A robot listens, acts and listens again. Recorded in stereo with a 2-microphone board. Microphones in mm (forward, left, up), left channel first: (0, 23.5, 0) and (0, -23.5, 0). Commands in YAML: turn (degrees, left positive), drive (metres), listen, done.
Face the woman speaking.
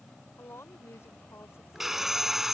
turn: 70
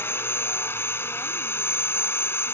listen: true
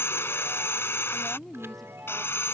done: "Facing the woman speaking."